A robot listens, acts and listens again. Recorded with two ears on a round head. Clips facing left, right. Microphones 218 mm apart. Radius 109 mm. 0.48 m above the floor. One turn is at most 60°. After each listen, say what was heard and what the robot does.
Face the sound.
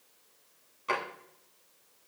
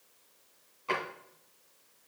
The drawer: about 25° left or 155° left. Turn 25° left.
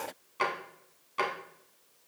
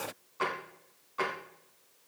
So it is at 135° left. Turn 60° left.
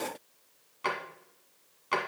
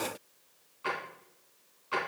The drawer is now 65° left. Turn 60° left.
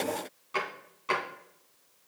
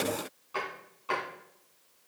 The drawer is now 30° left. Turn 30° left.
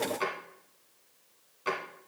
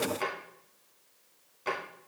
Found it: a drawer, straight ahead, 2 to 4 m away.